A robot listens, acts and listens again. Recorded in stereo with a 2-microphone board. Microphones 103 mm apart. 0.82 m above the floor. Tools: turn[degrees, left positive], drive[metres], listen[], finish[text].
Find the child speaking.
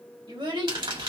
Thought: The child speaking: about 50° right or 130° right.
Action: turn[-50]
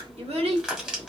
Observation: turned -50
Thought: So it is at 80° right.
Action: turn[-80]
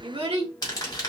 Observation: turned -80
Thought: The child speaking is now 75° right.
Action: turn[-75]
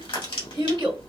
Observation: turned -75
Thought: The child speaking is now 40° right.
Action: turn[-40]
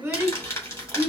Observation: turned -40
Thought: The child speaking is now 15° right.
Action: turn[-15]
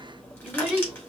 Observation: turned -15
Action: finish[Facing the child speaking.]